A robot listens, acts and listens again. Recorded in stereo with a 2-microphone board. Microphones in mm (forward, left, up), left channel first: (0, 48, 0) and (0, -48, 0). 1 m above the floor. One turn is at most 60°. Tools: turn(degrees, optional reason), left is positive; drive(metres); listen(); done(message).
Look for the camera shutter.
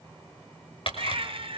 turn(degrees=60, reason="The camera shutter: about 70° left or 110° left.")
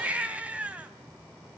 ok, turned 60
listen()
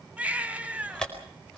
done("Found it: a camera shutter, straight ahead, over 4 m away.")